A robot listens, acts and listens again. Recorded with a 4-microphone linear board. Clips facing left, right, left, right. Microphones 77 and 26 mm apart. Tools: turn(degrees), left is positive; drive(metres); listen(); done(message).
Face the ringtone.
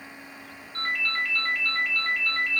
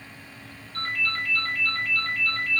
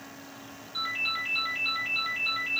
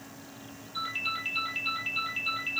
turn(degrees=25)
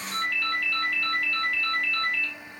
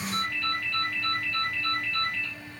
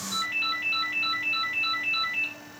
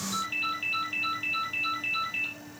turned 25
turn(degrees=130)
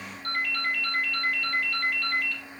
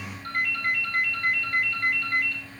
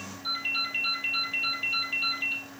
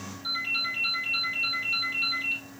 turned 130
turn(degrees=-10)
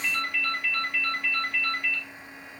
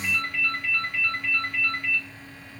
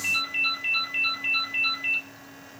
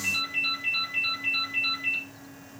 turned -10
done("Facing the ringtone.")